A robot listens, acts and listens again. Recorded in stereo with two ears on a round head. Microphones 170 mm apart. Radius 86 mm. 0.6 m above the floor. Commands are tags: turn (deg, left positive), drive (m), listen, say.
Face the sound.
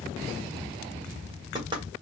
<turn deg="-25"/>
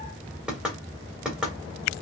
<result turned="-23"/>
<say>Facing the knocking, 1 to 2 m away.</say>